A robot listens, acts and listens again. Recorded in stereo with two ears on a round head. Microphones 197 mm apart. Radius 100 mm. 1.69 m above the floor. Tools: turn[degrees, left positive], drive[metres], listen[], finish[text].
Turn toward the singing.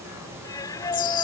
Thought: The singing: about 15° left or 165° left.
Action: turn[15]
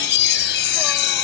Action: listen[]
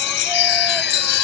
Action: listen[]
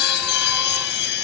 Action: finish[I heard singing, but can't make it out now. It was about straight ahead or 150° left.]